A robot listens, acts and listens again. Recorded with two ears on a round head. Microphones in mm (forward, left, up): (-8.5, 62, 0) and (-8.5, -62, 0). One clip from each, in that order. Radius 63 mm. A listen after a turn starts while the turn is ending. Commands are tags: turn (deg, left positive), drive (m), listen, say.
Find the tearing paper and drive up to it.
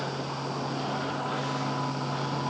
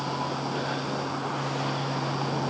<listen/>
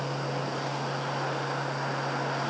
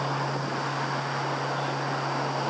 <listen/>
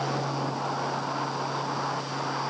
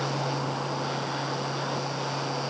<say>I can't make out tearing paper to turn to.</say>